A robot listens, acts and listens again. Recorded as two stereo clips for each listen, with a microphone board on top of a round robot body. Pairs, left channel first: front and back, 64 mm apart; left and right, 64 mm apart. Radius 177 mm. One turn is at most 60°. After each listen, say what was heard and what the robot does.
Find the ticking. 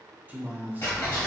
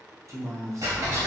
The ticking: 60° right. Turn 60° right.
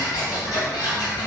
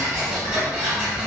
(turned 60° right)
The ticking is now 25° right. Turn 25° right.
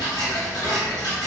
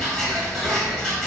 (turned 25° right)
Facing the ticking, 1 to 2 m away.